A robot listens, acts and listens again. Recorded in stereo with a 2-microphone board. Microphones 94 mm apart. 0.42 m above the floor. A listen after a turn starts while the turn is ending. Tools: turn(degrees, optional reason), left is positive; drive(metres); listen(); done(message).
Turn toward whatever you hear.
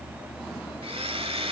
turn(degrees=-70, reason="The blender: about 70° right or 110° right.")
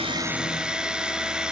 turn(degrees=-10, reason="So it is at 10° right.")
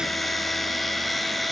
done("Facing the blender, 1 to 2 m away.")